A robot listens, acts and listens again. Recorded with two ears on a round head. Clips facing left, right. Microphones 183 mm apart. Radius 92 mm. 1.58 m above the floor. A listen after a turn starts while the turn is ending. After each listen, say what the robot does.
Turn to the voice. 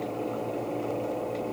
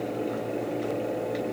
Keep listening.
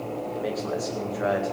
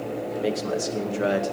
Turn 35° right.
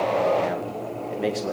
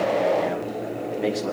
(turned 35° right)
Facing the man speaking.